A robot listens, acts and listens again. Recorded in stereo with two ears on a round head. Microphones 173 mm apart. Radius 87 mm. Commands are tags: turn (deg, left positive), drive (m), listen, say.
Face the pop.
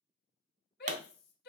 <turn deg="-40"/>
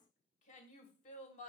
<listen/>
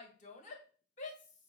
<say>I heard a pop, but can't make it out now. It was about straight ahead or 100° right.</say>